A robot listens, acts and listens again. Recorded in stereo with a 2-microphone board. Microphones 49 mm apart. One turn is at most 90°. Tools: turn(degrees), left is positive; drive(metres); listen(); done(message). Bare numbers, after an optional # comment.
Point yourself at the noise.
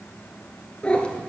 # The cat meowing: about 20° left or 160° left.
turn(20)
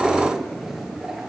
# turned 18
# So it is at 15° right.
turn(-15)
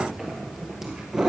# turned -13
# The cat meowing is now 15° right.
turn(-15)
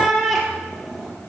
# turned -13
done("Found it: a cat meowing, straight ahead.")